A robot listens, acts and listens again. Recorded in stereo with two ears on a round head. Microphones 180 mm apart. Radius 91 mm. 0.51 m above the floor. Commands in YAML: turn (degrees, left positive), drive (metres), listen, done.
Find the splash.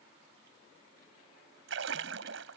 turn: -65
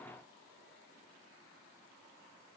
listen: true
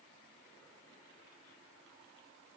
done: "I heard a splash, but can't make it out now. It was about straight ahead or 50° right."